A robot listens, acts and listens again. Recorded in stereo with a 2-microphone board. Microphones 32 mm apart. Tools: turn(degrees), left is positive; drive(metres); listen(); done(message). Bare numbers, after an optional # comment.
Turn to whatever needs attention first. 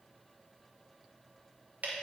listen()
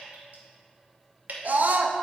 # The scream: about 65° right or 115° right.
turn(-65)
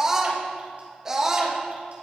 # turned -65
# So it is at 20° right.
turn(-20)
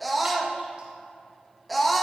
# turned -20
done("Facing the scream.")